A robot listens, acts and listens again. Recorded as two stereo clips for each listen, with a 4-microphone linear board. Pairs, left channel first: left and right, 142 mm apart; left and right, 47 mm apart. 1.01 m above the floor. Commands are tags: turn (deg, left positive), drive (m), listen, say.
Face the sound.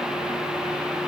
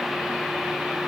<listen/>
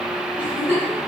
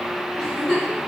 <turn deg="30"/>
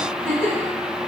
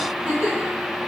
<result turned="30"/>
<turn deg="-20"/>
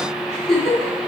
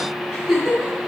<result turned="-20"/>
<say>Facing the giggle.</say>